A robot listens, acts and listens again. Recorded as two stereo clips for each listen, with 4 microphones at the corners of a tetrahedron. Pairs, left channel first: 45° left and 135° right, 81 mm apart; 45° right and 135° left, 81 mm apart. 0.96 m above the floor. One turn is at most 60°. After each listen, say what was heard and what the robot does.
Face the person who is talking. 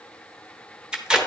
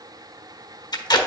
Keep listening.
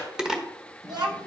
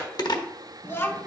The child speaking: 105° right. Turn 60° right.
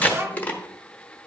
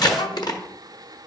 The child speaking is now 70° right. Turn 60° right.
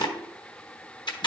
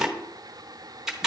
Nothing new. It was at 10° right. Turn 10° right.
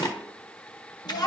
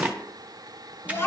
The child speaking is now 15° left. Turn 15° left.
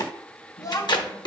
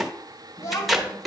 Facing the child speaking, 1 to 2 m away.